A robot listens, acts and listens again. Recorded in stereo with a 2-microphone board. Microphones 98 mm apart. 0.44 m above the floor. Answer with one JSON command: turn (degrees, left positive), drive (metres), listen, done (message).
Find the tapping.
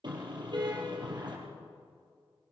{"listen": true}
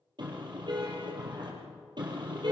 {"listen": true}
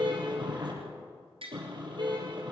{"turn": -65}
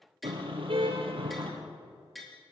{"done": "Facing the tapping."}